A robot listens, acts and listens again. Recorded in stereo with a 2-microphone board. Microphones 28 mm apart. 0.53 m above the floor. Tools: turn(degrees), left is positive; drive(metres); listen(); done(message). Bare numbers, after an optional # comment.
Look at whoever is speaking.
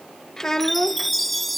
# The child speaking: about 15° left or 165° left.
turn(15)
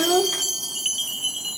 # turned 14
# So it is at 150° left.
turn(150)
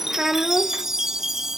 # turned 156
# The child speaking is now 10° right.
turn(-10)
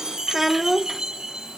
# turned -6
done("Found it: a child speaking, straight ahead.")